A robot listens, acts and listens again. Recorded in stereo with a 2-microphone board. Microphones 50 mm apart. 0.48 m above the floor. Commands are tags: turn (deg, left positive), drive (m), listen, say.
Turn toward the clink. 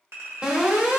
<turn deg="-60"/>
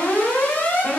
<listen/>
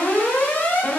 <listen/>
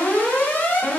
<say>I heard a clink, but can't make it out now. It was about straight ahead or 60° right.</say>